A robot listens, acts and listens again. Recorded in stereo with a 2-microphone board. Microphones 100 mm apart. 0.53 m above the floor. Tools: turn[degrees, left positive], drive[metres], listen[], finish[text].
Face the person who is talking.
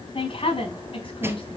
Thought: The woman speaking: about 65° left or 115° left.
Action: turn[65]
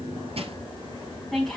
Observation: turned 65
Action: finish[Found it: a woman speaking, straight ahead, over 4 m away.]